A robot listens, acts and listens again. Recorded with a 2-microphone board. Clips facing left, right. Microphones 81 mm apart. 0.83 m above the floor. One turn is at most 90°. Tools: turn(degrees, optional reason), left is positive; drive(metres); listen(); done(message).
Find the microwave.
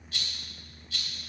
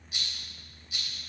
listen()
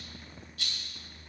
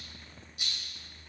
listen()
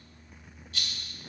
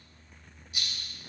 done("I can't make out a microwave to turn to.")